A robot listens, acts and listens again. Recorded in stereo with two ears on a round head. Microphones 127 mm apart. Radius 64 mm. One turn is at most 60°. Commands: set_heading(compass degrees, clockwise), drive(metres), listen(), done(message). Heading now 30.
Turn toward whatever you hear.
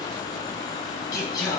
set_heading(0)
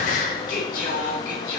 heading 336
set_heading(276)
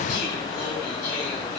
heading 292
set_heading(232)
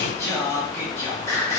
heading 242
set_heading(222)
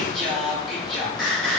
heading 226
done("Facing the singing, over 4 m away.")